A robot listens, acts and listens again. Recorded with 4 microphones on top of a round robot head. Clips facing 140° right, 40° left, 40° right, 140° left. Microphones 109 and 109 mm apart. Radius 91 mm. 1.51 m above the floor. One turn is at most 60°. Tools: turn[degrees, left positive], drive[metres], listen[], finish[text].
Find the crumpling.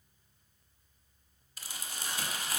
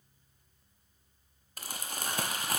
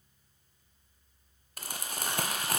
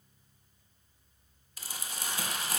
Action: finish[Facing the crumpling.]